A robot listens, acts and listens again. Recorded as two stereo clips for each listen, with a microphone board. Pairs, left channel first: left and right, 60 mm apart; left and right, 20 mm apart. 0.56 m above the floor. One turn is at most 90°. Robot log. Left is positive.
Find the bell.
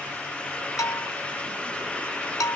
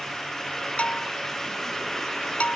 cmd yaw +90
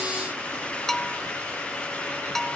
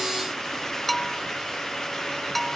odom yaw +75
end: Found it: a bell, straight ahead.